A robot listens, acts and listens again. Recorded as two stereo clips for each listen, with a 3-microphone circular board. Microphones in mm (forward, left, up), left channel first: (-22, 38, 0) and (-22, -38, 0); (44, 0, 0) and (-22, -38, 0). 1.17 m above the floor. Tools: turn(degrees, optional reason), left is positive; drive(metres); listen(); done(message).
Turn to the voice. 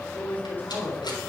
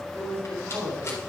turn(degrees=155, reason="The man speaking: 155° left.")
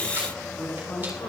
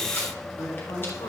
turn(degrees=45, reason="The man speaking is now 45° left.")
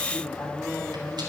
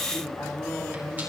done("Facing the man speaking.")